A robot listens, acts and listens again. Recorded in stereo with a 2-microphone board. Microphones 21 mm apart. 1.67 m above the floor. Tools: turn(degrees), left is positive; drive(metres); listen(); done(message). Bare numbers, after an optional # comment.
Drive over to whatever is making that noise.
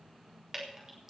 # The dripping: about 20° right or 160° right.
turn(-20)
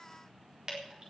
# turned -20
# So it is at 135° right.
turn(-135)
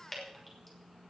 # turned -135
# The dripping is now 10° left.
turn(10)
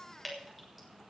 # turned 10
drive(1.0)
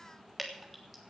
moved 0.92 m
drive(1.0)
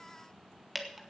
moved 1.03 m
drive(1.0)
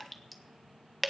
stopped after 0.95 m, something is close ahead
done("Arrived at the dripping, straight ahead.")